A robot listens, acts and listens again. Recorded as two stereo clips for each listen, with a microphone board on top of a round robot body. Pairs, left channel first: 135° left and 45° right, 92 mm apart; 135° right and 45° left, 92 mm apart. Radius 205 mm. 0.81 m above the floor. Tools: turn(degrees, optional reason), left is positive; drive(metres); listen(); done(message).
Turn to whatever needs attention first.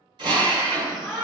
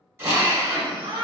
turn(degrees=45, reason="The shout: 45° left.")
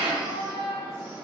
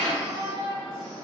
done("Facing the shout.")